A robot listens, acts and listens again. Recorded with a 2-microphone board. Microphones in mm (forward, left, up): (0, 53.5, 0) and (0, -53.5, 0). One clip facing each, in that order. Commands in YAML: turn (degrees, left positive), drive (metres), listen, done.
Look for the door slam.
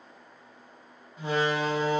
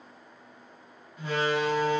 turn: 30
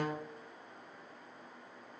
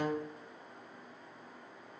listen: true
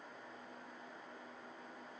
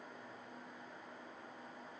done: "I heard a door slam, but can't make it out now. It was about straight ahead or 120° left."